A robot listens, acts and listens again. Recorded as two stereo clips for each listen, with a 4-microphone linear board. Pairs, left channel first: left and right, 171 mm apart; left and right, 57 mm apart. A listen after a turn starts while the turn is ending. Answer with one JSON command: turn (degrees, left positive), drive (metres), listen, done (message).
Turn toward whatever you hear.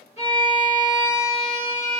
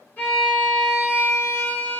{"turn": 40}
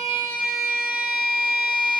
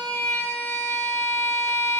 {"turn": 95}
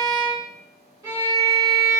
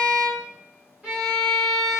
{"turn": -25}
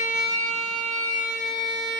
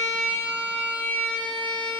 {"turn": 25}
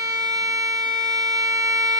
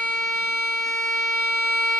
{"done": "Found it: a violin, straight ahead."}